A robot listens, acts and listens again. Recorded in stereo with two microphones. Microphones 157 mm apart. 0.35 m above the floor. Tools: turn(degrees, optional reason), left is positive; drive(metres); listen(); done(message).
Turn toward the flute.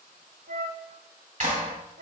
turn(degrees=-90)
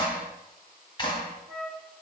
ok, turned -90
done("Found it: a flute, straight ahead, under 1 m away.")